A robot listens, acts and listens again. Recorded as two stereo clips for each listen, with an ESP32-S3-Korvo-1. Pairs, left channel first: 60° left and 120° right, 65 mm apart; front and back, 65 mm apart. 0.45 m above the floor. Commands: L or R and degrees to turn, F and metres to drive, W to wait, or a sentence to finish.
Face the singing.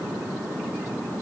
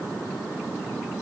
W
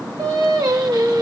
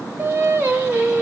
R120
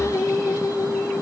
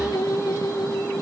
L20
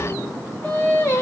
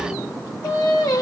Facing the singing, 1 to 2 m away.